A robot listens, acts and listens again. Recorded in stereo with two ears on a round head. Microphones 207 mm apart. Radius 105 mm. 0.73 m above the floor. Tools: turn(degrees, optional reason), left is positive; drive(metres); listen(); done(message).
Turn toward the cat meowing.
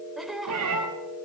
turn(degrees=-75, reason="The cat meowing: about 75° right or 105° right.")
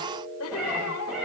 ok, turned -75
done("Found it: a cat meowing, straight ahead.")